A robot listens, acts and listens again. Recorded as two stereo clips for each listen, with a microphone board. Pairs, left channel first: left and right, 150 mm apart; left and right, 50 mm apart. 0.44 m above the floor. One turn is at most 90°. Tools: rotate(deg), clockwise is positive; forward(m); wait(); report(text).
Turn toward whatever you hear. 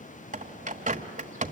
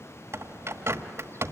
rotate(60)
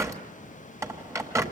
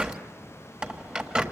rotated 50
rotate(20)
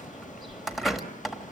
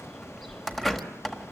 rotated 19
report("Facing the bird.")